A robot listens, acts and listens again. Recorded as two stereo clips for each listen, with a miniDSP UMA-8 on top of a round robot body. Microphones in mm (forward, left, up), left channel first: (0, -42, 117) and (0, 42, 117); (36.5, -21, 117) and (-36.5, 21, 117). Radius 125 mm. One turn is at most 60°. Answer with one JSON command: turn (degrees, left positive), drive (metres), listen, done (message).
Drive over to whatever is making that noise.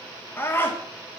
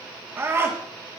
{"turn": -60}
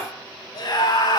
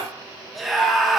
{"turn": -60}
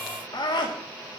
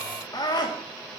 {"turn": -60}
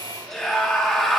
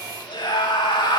{"drive": 1.0}
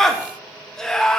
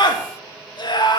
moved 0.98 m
{"drive": 1.0}
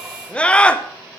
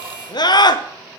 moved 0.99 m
{"turn": -15}
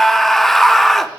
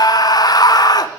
{"drive": 1.0}
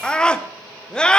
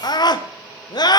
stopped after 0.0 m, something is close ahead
{"turn": -10}
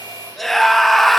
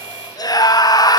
{"done": "Arrived at the scream, straight ahead."}